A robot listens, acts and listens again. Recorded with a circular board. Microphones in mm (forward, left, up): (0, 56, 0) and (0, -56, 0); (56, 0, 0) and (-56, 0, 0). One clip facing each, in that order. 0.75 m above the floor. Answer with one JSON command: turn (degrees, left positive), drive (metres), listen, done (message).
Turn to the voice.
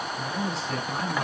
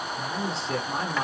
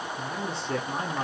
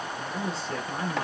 {"turn": -30}
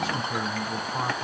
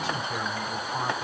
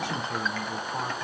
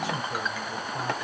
{"done": "Facing the man speaking."}